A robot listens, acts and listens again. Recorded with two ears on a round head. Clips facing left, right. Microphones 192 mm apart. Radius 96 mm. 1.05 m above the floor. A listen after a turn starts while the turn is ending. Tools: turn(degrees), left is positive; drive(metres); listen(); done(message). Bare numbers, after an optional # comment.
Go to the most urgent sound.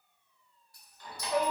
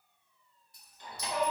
# The shout: about 55° left or 125° left.
turn(55)
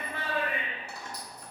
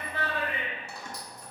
drive(1.0)
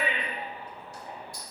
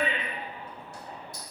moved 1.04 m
# The shout is now 10° left.
turn(10)
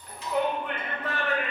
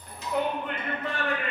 drive(1.0)
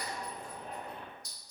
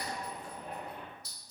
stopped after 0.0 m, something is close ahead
done("Arrived at the shout, straight ahead.")